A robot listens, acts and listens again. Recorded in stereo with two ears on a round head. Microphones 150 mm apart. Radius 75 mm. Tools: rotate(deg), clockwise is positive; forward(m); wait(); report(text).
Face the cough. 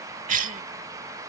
rotate(50)
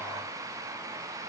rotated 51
wait()
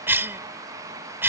rotate(15)
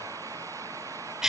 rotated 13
report("Facing the cough.")